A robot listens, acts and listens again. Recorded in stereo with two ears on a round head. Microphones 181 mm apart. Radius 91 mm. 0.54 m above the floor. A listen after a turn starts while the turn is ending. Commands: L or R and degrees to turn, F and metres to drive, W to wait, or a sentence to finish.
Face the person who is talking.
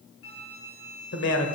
L65
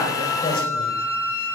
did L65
W
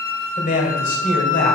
L45
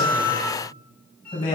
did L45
L20
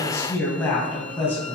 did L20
L10
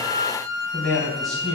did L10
Facing the man speaking.